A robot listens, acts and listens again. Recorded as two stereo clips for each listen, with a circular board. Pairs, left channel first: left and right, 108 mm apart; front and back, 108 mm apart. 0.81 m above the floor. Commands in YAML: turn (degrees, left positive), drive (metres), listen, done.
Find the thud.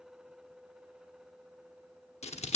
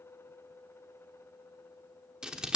listen: true
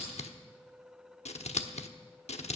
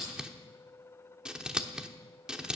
listen: true
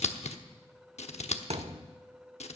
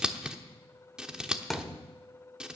turn: -90
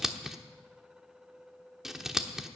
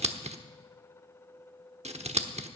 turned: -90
done: "Facing where the thud came from. I can't hear it now."